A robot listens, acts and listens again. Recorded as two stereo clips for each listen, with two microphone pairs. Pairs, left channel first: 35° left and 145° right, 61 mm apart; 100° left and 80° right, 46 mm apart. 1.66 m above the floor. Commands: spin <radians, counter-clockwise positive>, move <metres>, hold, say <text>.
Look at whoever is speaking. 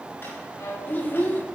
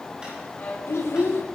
spin 1.66
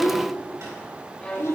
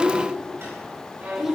say Facing the child speaking.